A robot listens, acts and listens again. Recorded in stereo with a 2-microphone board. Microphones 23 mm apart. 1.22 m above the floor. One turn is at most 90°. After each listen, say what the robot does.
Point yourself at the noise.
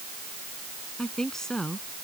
Turn 25° left.
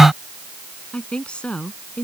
Turn 90° left.
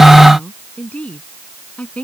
Turn 70° left.
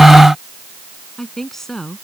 Turn 10° left.
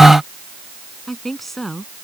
Facing the woman speaking.